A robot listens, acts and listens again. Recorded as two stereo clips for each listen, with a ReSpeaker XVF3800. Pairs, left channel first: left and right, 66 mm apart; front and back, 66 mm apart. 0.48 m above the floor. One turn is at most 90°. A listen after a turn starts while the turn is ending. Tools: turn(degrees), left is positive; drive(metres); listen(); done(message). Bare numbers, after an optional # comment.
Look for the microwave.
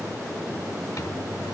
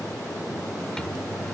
# The microwave: 80° left.
turn(80)
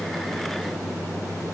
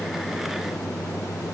# The microwave is now 35° left.
turn(35)
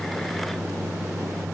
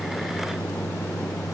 # The microwave is now 10° right.
turn(-10)
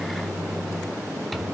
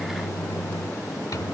done("Facing the microwave.")